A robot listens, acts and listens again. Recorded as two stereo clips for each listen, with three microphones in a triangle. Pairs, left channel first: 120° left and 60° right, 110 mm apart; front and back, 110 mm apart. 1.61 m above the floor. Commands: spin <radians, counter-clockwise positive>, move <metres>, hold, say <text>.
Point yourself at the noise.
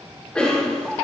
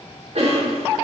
spin -2.79
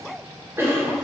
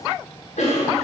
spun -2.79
spin 0.17
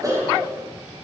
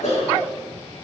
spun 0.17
say Found it: a cough, straight ahead, 2 to 4 m away.